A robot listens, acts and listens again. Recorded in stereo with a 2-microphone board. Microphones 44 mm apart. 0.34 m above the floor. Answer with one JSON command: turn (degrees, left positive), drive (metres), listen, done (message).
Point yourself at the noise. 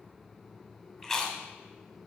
{"turn": 30}
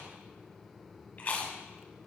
{"turn": 145}
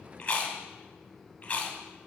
{"turn": 45}
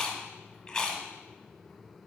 {"turn": 30}
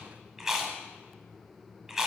{"done": "Facing the chewing."}